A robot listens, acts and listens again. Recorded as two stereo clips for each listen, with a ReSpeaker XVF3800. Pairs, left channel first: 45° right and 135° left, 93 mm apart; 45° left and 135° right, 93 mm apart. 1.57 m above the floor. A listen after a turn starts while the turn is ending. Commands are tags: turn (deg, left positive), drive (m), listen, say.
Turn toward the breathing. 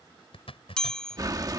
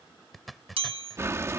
<turn deg="170"/>
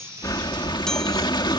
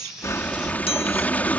<turn deg="-25"/>
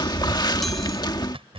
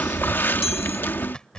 <turn deg="-20"/>
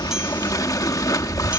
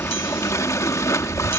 <say>Facing the breathing.</say>